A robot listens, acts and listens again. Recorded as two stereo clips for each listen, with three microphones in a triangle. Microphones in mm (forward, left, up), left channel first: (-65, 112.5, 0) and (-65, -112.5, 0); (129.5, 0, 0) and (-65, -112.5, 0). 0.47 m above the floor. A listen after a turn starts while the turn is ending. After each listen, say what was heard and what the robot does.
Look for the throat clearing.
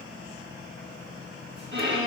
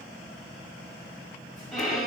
Keep listening.
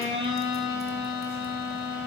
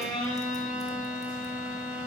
Keep listening.
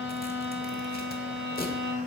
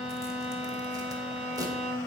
I can't make out throat clearing to turn to.